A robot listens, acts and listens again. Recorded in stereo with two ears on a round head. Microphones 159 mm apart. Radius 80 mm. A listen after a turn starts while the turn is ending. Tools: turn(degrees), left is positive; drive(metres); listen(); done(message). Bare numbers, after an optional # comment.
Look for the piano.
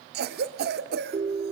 listen()
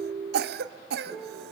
turn(30)
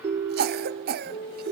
# So it is at 150° left.
turn(150)
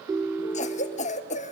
listen()
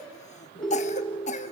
# The piano is now 30° left.
turn(30)
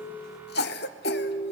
listen()
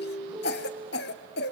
# The piano is now 10° right.
turn(-10)
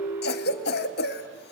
listen()
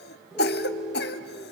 done("Facing the piano, 2 to 4 m away.")